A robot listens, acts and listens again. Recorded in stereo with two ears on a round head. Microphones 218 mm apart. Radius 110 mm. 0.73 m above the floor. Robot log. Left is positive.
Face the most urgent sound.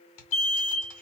note: The alarm: about 25° left or 155° left.
cmd yaw +25
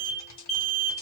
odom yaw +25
end: Facing the alarm.